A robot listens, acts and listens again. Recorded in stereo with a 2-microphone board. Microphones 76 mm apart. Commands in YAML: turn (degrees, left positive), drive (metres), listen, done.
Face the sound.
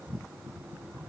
listen: true
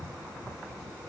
listen: true
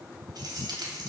turn: -60
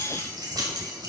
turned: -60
turn: -60
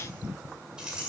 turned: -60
turn: -10
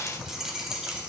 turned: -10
turn: -10
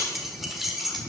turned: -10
done: "Found it: keys jangling, straight ahead."